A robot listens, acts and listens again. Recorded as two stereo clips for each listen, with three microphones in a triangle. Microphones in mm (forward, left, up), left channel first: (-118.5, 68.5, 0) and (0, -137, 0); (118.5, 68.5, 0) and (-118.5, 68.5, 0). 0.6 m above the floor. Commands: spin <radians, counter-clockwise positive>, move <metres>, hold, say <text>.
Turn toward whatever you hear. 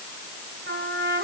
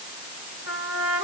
spin -0.26
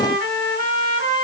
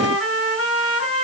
spin -0.17
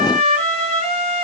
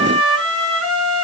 say Facing the trumpet.